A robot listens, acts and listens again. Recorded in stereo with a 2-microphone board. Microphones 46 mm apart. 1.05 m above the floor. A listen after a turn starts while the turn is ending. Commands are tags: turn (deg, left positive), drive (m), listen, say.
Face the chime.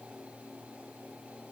<listen/>
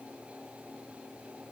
<listen/>
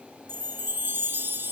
<turn deg="-50"/>
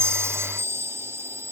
<turn deg="-75"/>
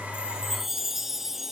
<say>Facing the chime.</say>